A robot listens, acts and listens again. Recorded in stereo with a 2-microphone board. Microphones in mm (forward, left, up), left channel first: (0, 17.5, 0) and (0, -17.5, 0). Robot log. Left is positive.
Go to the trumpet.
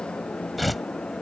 cmd idle
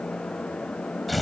cmd idle
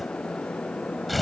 end: I can't make out a trumpet, only tearing paper.